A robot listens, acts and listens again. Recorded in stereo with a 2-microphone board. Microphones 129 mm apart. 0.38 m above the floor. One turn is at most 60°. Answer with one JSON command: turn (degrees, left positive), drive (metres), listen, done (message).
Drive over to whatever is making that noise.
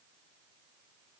{"listen": true}
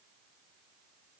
{"listen": true}
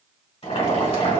{"turn": 55}
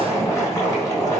{"turn": 25}
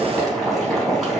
{"drive": 1.0}
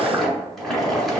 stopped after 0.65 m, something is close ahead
{"done": "I am next to the boiling."}